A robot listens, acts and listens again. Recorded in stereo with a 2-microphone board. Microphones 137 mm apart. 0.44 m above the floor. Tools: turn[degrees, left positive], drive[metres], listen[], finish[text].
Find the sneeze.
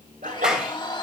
Action: turn[-90]
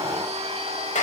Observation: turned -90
Action: finish[Facing where the sneeze came from. I can't hear it now.]